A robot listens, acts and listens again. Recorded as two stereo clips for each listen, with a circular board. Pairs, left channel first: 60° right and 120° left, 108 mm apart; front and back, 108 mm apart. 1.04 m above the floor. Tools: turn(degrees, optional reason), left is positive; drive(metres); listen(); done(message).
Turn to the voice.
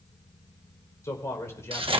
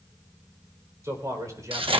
turn(degrees=-125, reason="The man speaking: 125° right.")
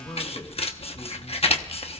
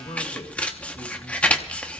listen()
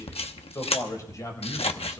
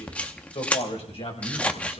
done("Facing the man speaking, over 4 m away.")